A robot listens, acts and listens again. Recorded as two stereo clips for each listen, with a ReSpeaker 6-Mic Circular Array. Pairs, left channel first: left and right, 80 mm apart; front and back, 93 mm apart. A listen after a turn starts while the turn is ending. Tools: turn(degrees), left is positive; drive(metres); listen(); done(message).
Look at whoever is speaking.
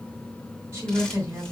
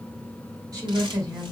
turn(degrees=-140)
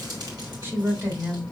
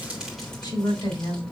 turn(degrees=-30)
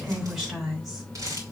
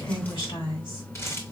done("Found it: a woman speaking, straight ahead.")